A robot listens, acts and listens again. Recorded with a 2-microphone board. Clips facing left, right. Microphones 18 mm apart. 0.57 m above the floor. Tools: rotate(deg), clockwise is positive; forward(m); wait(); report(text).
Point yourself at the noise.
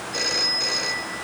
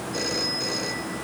rotate(-20)
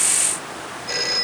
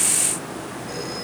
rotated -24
rotate(-140)
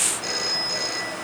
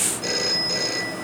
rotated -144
report("Found it: a phone ringing, straight ahead.")